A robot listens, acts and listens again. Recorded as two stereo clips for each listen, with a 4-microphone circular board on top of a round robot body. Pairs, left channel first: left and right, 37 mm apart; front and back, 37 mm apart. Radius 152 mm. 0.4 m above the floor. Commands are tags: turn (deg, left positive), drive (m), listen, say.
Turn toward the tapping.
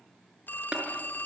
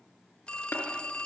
<turn deg="-25"/>
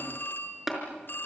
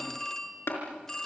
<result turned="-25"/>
<say>Facing the tapping, over 4 m away.</say>